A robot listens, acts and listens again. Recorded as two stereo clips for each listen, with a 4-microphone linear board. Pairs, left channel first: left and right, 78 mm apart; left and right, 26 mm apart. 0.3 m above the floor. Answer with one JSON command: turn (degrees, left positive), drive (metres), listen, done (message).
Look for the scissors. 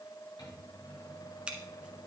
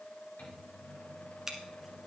{"turn": -30}
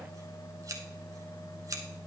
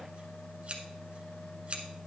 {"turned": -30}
{"turn": -135}
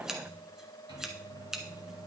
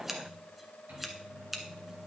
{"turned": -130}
{"done": "Found it: scissors, straight ahead."}